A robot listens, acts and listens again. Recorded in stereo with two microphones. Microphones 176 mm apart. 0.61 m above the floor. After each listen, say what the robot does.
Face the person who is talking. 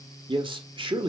Turn 30° right.
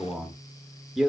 Facing the man speaking, 1 to 2 m away.